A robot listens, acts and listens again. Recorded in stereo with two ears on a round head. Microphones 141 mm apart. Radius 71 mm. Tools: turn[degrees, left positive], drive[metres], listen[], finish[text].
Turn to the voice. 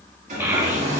Action: turn[-30]
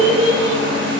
Thought: So it is at 130° right.
Action: turn[-130]
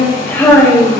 Thought: The child speaking is now 10° left.
Action: turn[10]
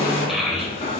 Action: finish[Found it: a child speaking, straight ahead.]